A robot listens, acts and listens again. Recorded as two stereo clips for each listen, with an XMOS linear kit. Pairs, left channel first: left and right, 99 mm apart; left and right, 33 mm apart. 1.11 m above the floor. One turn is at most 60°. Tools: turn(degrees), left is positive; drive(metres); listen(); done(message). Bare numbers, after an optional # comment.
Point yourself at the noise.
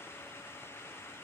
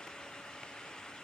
listen()
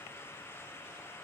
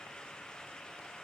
listen()
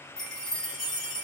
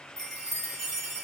turn(30)
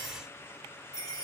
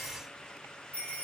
# So it is at 145° left.
turn(60)
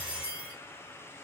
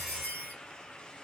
# The chime is now 80° left.
turn(60)
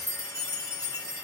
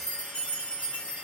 # The chime is now 35° left.
turn(35)
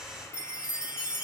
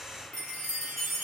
# The chime is now 10° right.
turn(-10)
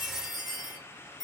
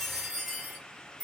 done("Facing the chime, 1 to 2 m away.")